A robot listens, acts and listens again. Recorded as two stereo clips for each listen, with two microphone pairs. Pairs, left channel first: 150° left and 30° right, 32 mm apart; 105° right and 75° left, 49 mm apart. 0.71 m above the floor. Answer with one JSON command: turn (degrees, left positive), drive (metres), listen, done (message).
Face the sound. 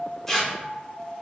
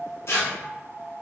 {"turn": -125}
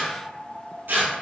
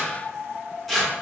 {"turn": -15}
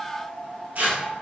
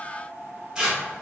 {"done": "Found it: tearing paper, straight ahead."}